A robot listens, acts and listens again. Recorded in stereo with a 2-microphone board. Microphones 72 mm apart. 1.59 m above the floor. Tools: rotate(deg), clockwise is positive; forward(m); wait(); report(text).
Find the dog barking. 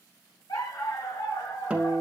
rotate(-65)
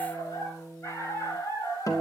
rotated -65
rotate(-45)
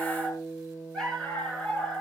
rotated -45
rotate(-10)
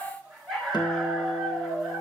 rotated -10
report("Found it: a dog barking, straight ahead.")